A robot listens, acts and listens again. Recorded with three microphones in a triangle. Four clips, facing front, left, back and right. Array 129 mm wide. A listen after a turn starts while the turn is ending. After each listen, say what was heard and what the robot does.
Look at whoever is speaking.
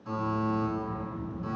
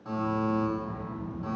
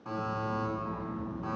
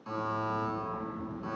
The child speaking: 170° left. Turn 170° left.
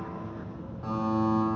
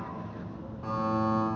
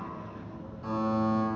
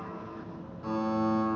The child speaking is now 50° left. Turn 50° left.
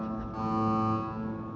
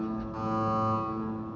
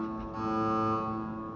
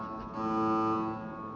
The child speaking is now 25° left. Turn 25° left.
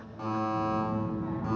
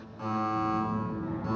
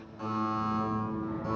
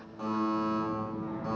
The child speaking is now 15° right. Turn 15° right.
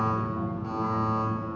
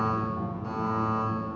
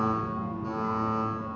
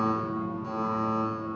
Found it: a child speaking, straight ahead, 1 to 2 m away.